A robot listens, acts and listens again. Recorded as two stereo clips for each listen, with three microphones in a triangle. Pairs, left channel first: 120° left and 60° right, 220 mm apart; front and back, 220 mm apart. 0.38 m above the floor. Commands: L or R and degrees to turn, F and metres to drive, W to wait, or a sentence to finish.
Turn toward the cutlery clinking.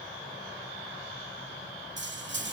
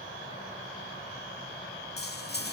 R35
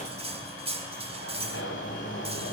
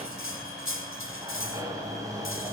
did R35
Facing the cutlery clinking, 1 to 2 m away.